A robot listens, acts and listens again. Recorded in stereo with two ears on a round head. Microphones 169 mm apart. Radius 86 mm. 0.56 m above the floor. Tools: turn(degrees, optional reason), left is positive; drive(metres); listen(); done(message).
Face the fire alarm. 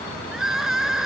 listen()
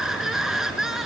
listen()
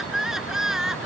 done("I can't make out a fire alarm, only crying.")